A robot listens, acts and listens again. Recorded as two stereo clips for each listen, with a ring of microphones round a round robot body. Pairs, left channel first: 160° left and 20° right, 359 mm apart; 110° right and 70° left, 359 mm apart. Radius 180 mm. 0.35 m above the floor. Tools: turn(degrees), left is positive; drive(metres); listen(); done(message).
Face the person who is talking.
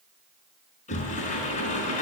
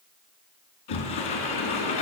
listen()
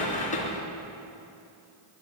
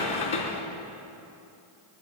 listen()
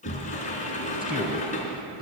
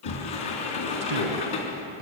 turn(degrees=45)
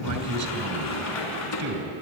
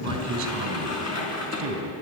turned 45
turn(degrees=15)
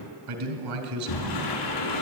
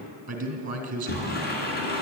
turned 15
done("Facing the man speaking.")